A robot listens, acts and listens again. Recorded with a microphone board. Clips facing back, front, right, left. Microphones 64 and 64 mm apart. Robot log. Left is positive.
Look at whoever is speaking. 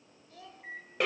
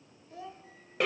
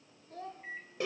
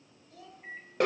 note: The child speaking: 60° right.
cmd yaw -60
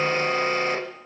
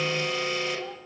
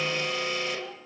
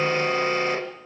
cmd idle
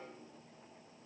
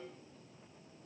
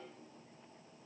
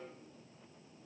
cmd idle
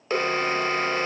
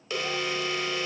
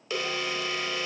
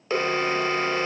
end: I heard a child speaking from this way, but can't make it out now.